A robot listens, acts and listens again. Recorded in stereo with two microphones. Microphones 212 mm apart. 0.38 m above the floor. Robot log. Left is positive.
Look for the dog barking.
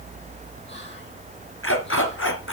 note: The dog barking: about 65° left or 115° left.
cmd yaw +65
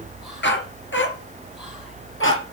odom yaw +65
note: So it is at 65° left.
cmd yaw +65
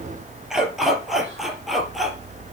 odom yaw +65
end: Facing the dog barking, 2 to 4 m away.